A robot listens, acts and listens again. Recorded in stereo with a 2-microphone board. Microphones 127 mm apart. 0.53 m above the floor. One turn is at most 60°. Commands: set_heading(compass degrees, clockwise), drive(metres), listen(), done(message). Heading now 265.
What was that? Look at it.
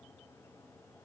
listen()
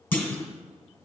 set_heading(245)
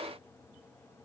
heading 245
listen()
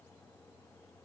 done("I heard a clunk, but can't make it out now. It was about straight ahead or 140° left.")